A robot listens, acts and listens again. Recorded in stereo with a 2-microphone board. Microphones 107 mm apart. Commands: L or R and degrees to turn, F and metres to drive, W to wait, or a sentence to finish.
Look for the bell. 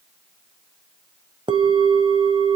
R50
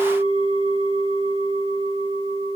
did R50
R80
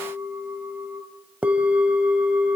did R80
R15
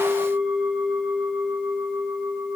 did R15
Facing the bell, 1 to 2 m away.